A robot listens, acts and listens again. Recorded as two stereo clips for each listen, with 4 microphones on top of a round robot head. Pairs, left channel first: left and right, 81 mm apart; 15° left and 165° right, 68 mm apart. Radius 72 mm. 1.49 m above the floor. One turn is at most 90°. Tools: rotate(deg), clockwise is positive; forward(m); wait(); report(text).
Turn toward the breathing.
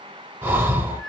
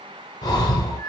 rotate(25)
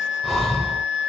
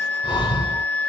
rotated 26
report("Facing the breathing.")